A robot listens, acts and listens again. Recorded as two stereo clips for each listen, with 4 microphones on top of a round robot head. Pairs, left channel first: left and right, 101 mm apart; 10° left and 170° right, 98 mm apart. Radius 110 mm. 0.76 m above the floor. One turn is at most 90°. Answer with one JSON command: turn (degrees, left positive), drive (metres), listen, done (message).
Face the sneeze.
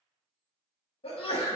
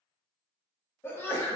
{"turn": 75}
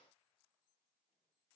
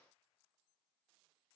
{"done": "Facing where the sneeze came from. I can't hear it now."}